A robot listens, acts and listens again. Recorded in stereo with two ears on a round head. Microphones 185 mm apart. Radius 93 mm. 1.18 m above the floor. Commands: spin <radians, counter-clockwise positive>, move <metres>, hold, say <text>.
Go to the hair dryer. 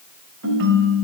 hold
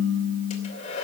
spin 0.61
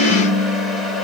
move 1.0
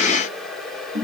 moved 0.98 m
move 1.0
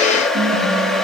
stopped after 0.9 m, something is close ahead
say Arrived at the hair dryer, straight ahead.